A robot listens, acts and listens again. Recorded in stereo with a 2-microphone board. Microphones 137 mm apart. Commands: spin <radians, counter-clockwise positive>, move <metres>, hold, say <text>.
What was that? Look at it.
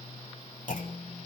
spin 1.31
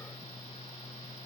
hold
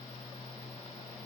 say I heard a clunk, but can't make it out now. It was about straight ahead or 30° left.